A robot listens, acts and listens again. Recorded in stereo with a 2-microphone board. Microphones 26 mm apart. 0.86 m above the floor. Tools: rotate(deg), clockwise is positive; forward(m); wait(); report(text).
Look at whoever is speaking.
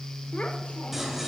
wait()
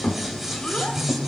rotate(-45)
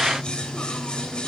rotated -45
wait()
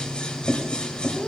wait()
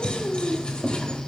rotate(-95)
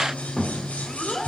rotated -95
rotate(-20)
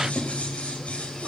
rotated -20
wait()
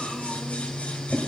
wait()
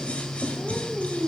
report("Facing the child speaking, 1 to 2 m away.")